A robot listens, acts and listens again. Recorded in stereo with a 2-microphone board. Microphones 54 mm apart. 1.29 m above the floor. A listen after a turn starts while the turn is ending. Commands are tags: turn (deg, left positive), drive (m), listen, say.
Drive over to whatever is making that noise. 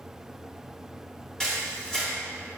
<turn deg="30"/>
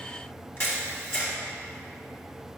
<turn deg="135"/>
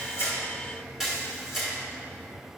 <drive m="1.0"/>
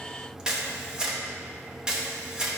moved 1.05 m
<turn deg="-15"/>
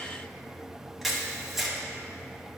<drive m="1.0"/>
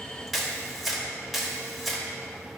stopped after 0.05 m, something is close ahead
<say>I am next to the camera shutter.</say>